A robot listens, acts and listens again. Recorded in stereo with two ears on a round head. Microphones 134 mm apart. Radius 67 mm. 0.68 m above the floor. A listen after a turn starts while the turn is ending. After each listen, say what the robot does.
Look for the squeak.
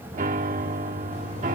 Keep listening.
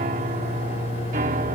Keep listening.
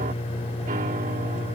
I can't make out a squeak, only a piano and a microwave.